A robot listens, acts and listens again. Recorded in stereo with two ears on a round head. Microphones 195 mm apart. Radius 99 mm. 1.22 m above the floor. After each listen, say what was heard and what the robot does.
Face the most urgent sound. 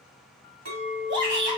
The shout: about 50° right or 130° right. Turn 50° right.
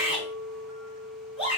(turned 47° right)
Facing the shout.